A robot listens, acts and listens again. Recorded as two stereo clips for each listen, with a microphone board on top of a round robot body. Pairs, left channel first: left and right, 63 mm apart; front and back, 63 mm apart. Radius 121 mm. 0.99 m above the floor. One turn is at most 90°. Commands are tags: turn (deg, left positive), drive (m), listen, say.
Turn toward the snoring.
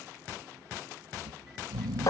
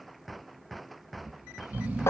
<turn deg="-90"/>
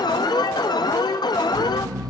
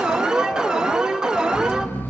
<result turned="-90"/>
<turn deg="-65"/>
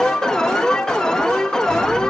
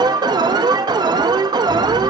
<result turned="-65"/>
<listen/>
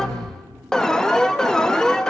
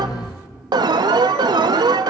<say>Facing the snoring.</say>